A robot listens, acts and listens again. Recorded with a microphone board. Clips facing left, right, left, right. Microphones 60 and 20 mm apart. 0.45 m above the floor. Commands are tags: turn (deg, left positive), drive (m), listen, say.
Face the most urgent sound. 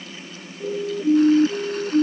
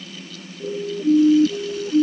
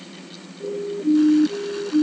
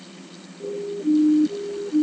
<turn deg="30"/>
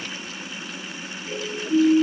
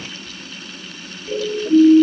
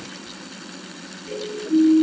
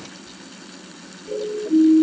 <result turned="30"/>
<turn deg="-25"/>
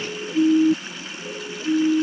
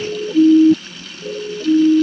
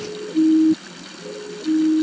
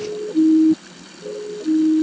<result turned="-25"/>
<turn deg="-25"/>
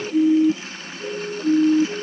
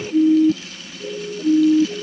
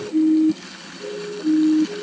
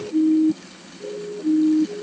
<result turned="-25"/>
<say>Facing the siren.</say>